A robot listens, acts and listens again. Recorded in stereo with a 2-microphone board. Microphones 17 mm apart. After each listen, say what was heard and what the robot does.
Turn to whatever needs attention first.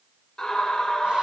The scream: about 50° left or 130° left. Turn 50° left.
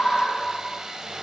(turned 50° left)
So it is at 65° left. Turn 65° left.
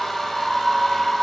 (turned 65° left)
The scream is now 10° left. Turn 10° left.
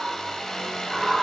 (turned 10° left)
Found it: a scream, straight ahead, 1 to 2 m away.